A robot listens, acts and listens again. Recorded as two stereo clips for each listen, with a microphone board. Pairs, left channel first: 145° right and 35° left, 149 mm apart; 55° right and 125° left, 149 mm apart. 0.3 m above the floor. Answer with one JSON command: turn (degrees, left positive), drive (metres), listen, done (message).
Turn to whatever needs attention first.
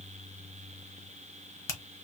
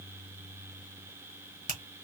{"listen": true}
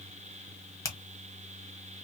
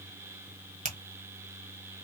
{"listen": true}
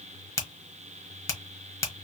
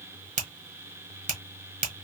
{"done": "I can't make out anything urgent to turn to."}